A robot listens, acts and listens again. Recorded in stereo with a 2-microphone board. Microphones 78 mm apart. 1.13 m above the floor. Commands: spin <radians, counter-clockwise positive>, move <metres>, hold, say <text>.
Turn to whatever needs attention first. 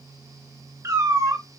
hold
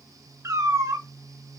hold
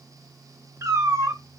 say I can't make out anything urgent, only a cat meowing.